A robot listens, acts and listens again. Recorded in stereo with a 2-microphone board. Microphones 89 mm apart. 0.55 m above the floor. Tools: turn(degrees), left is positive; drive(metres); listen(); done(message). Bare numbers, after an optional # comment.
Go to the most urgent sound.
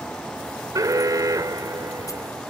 # The alarm: about 40° right or 140° right.
turn(-40)
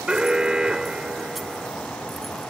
# So it is at 10° right.
turn(-10)
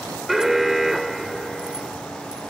drive(1.0)
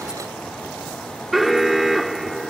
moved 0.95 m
drive(1.0)
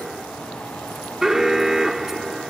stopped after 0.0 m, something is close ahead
done("Arrived at the alarm, straight ahead.")